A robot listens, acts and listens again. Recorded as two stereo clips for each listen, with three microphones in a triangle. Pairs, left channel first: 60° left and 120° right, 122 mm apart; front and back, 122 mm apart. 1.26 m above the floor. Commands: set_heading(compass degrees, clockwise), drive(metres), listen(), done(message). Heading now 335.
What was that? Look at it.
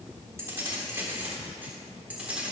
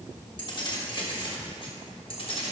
set_heading(15)
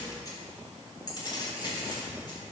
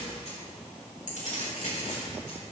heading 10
set_heading(0)
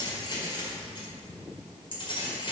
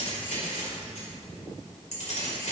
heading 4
set_heading(349)
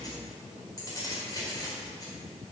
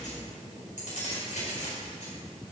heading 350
done("Facing the keys jangling, over 4 m away.")